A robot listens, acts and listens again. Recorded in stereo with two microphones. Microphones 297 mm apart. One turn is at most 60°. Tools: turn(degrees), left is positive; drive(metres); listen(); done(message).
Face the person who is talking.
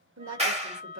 turn(degrees=-60)
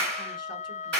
listen()
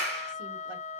listen()
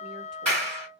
done("I heard a woman speaking, but can't make it out now. It was about straight ahead or 60° right.")